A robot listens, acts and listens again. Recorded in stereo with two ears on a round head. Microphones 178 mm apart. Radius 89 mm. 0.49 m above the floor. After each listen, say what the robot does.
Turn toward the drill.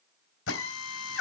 Turn 70° left.
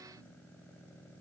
Keep listening.
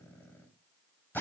Turn 10° left.
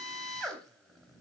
Facing the drill, 2 to 4 m away.